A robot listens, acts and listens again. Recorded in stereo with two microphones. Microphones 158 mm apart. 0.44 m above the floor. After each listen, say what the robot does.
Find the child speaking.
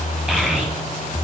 Turn 30° right.
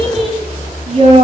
Turn 135° right.
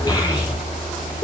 Turn 30° left.
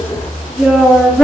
Found it: a child speaking, straight ahead.